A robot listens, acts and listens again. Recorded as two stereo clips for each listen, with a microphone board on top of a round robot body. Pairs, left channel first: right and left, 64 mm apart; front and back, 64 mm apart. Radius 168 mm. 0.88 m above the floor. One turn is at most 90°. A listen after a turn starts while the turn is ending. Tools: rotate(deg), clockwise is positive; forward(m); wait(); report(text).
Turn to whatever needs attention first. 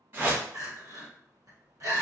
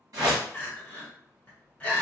rotate(-65)
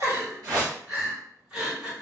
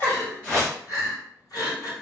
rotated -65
rotate(-10)
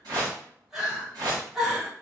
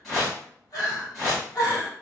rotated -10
report("Found it: crying, straight ahead, 1 to 2 m away.")